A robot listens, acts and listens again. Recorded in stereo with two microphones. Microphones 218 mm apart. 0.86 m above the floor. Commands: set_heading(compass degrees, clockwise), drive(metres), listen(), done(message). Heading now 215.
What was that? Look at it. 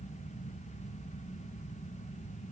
listen()
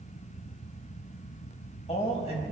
set_heading(185)
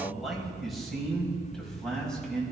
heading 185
done("Found it: a man speaking, straight ahead, over 4 m away.")